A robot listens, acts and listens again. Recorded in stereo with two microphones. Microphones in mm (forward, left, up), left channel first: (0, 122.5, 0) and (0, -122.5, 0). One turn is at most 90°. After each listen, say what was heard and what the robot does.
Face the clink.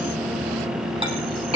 The clink: about 25° right or 155° right. Turn 25° right.
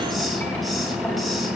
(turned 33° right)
Keep listening.
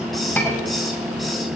So it is at 10° left. Turn 10° left.
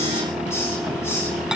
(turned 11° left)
Keep listening.
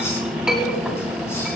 Found it: a clink, straight ahead.